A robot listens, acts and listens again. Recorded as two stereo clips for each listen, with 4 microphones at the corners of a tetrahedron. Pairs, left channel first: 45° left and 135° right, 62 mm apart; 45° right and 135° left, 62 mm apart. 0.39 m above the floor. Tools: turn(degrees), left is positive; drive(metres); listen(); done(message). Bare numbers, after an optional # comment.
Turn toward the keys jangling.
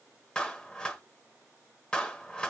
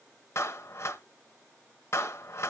listen()
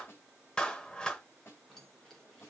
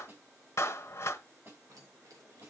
# The keys jangling: 125° left.
turn(125)
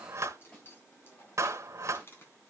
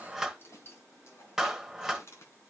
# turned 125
done("Found it: keys jangling, straight ahead, 2 to 4 m away.")